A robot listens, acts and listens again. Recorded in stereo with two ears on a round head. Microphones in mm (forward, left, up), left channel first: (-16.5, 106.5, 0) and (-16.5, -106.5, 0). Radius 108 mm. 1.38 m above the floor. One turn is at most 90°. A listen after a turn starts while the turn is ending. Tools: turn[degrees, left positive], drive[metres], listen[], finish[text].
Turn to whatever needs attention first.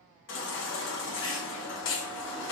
Thought: The baby crying: about 55° left or 125° left.
Action: turn[55]
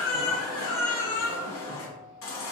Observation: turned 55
Thought: So it is at 65° left.
Action: turn[65]
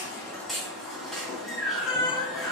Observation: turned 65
Action: finish[Facing the baby crying, 1 to 2 m away.]